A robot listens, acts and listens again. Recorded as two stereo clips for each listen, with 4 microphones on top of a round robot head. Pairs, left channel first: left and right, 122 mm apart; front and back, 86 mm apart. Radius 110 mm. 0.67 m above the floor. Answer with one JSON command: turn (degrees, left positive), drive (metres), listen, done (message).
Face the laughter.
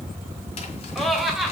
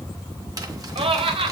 {"turn": 180}
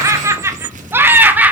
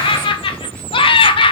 {"turn": -10}
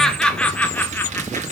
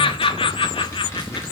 {"turn": 10}
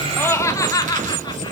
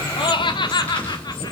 {"turn": 30}
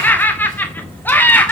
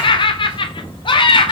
{"turn": 15}
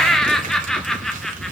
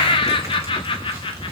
{"done": "Facing the laughter, 1 to 2 m away."}